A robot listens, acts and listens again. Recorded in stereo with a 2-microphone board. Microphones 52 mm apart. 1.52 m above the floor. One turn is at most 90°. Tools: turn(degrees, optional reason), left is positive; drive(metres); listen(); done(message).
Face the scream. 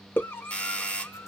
turn(degrees=45, reason="The scream: about 45° left or 135° left.")
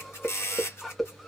done("Facing the scream.")